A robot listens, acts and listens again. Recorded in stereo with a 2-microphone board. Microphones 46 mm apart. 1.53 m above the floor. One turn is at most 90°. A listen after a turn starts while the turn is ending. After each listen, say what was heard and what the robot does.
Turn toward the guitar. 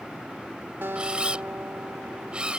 The guitar: about 60° right or 120° right. Turn 60° right.
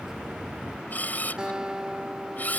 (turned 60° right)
So it is at 20° right. Turn 20° right.
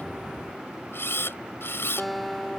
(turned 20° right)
Found it: a guitar, straight ahead.